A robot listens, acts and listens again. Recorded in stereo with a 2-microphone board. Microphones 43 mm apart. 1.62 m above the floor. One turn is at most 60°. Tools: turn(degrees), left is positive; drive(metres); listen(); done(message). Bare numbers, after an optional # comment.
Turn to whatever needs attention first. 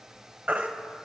# The baby crying: about 30° right or 150° right.
turn(-30)
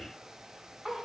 listen()
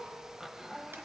listen()
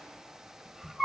done("Found it: a baby crying, straight ahead, 1 to 2 m away.")